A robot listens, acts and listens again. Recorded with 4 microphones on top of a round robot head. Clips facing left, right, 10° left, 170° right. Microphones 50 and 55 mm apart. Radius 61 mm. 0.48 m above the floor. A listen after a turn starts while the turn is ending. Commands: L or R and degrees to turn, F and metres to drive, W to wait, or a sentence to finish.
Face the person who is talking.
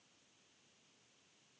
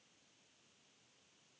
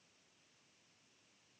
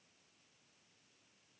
W
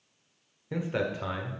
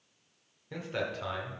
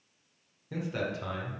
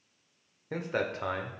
L165
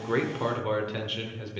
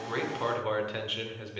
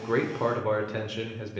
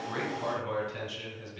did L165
Found it: a man speaking, straight ahead, 1 to 2 m away.